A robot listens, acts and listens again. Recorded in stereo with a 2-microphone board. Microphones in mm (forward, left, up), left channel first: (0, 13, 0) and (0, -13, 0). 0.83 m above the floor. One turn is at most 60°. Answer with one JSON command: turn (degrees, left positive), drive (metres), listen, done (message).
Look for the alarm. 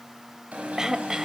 {"turn": -60}
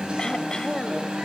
{"turn": -35}
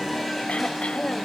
{"done": "Facing the alarm, over 4 m away."}